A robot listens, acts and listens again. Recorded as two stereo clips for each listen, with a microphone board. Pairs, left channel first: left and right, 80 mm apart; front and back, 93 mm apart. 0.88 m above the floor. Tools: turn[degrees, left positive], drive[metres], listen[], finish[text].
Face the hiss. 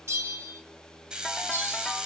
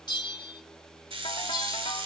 Thought: The hiss: 170° right.
Action: turn[-170]
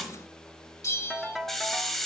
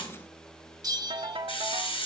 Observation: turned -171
Action: finish[Facing the hiss.]